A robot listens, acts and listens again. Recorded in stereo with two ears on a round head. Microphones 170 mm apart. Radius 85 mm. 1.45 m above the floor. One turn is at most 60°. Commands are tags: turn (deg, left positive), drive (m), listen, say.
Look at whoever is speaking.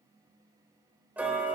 <listen/>
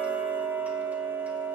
<listen/>
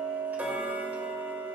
<say>I can't make out anyone speaking to turn to.</say>